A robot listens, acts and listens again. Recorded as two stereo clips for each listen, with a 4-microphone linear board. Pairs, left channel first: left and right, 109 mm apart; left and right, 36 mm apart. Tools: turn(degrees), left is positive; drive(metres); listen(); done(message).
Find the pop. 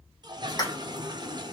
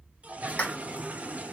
turn(degrees=35)
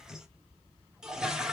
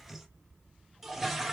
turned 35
listen()
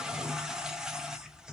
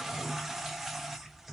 done("I heard a pop, but can't make it out now. It was about straight ahead or 110° left.")